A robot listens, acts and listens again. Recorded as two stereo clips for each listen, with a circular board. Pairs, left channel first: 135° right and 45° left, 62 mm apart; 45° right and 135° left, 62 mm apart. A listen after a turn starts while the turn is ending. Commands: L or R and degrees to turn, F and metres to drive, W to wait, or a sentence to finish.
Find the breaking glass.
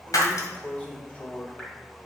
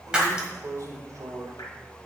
R150
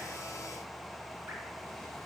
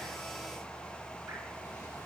Facing where the breaking glass came from. I can't hear it now.